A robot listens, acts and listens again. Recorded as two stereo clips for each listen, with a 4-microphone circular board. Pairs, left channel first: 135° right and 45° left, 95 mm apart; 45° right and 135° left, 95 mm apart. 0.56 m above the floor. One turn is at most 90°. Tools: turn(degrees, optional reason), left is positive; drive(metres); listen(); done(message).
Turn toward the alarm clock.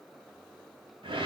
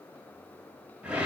listen()
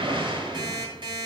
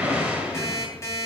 turn(degrees=10, reason="The alarm clock: 10° left.")
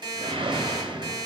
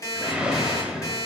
done("Found it: an alarm clock, straight ahead, 2 to 4 m away.")